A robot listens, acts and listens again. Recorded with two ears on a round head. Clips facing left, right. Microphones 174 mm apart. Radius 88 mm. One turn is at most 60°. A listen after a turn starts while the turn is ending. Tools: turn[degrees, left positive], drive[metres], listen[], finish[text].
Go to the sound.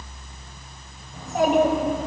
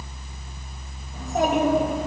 Action: turn[30]
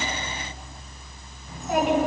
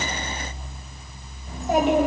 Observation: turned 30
Thought: So it is at 30° right.
Action: turn[-30]
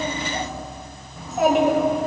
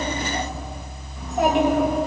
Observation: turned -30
Action: drive[1.0]
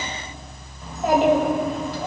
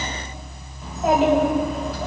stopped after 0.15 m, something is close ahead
Action: finish[Something is in my way. I am facing the child speaking but have not reached it.]